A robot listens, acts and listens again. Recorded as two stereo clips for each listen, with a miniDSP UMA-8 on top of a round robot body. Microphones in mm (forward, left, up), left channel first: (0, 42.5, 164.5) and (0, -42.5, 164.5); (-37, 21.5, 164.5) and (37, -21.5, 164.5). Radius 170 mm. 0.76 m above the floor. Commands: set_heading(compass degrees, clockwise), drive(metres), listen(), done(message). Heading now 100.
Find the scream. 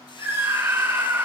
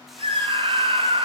set_heading(125)
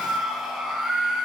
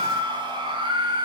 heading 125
done("Found it: a scream, straight ahead, 2 to 4 m away.")